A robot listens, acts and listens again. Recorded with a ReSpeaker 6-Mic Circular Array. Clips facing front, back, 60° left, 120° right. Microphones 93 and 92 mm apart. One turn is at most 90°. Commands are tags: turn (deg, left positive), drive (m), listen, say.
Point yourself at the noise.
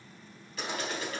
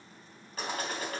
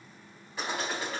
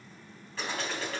<turn deg="90"/>
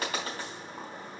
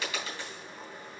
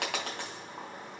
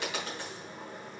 <turn deg="45"/>
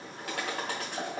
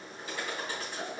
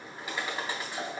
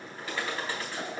<turn deg="-15"/>
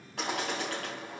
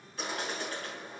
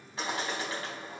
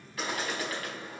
<say>Found it: a bird, straight ahead, 2 to 4 m away.</say>